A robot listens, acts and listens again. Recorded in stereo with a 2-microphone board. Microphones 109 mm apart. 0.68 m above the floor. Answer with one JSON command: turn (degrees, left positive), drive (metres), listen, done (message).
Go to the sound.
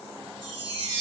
{"turn": -50}
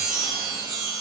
{"drive": 1.0}
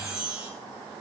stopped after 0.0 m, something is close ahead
{"done": "Blocked. The chime is further on, straight ahead."}